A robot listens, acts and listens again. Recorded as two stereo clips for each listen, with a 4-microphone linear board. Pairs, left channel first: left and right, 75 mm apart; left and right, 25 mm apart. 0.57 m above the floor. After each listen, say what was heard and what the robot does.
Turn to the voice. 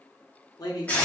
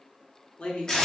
The man speaking: about 55° left or 125° left. Turn 55° left.
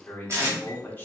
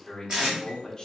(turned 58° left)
So it is at 30° left. Turn 30° left.
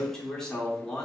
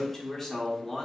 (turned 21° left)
The man speaking is now 10° left. Turn 10° left.
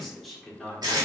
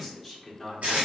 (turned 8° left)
Facing the man speaking, 1 to 2 m away.